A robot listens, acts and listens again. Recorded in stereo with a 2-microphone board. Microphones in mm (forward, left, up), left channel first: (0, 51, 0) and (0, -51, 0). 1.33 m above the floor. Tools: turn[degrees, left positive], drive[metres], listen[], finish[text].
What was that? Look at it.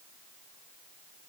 Action: listen[]
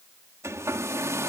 Thought: The hair dryer: about 30° right or 150° right.
Action: turn[-30]
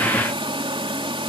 Thought: So it is at 120° right.
Action: turn[-120]
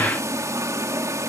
Thought: The hair dryer is now 30° right.
Action: turn[-30]
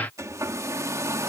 Thought: The hair dryer is now 30° right.
Action: turn[-30]
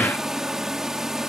Action: finish[Found it: a hair dryer, straight ahead.]